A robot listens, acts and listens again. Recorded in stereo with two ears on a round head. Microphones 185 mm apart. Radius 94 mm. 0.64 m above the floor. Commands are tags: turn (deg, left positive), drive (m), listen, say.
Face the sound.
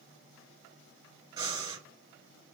<turn deg="-20"/>
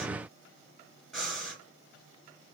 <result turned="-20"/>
<say>Facing the breathing, 1 to 2 m away.</say>